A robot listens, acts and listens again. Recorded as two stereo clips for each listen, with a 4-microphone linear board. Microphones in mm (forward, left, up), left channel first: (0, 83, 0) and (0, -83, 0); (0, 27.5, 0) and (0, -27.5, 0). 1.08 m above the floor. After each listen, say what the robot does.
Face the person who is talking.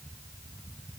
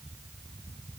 Keep listening.
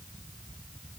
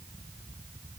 Keep listening.
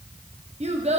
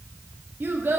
Turn 40° right.
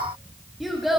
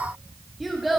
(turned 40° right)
Found it: a child speaking, straight ahead, under 1 m away.